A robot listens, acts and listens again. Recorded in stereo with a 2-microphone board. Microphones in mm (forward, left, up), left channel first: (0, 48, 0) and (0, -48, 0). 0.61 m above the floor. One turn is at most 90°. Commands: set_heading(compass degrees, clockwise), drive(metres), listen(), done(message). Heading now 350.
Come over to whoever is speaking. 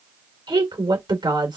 set_heading(45)
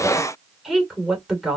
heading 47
drive(1.0)
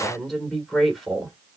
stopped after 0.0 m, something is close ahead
done("Something is in my way. I am facing the woman speaking but have not reached it.")